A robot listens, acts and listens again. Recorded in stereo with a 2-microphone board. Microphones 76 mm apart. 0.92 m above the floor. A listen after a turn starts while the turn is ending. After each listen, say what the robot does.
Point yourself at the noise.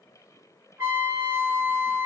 Turn 35° right.
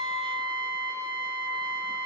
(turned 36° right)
Found it: a trumpet, straight ahead.